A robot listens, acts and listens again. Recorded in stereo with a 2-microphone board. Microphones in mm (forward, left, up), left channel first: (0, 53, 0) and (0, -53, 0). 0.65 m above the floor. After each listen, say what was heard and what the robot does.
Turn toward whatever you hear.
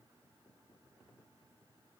Keep listening.
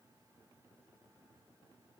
Keep listening.
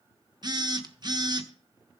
The phone buzzing: about 40° right or 140° right. Turn 40° right.
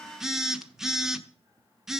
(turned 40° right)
Found it: a phone buzzing, straight ahead.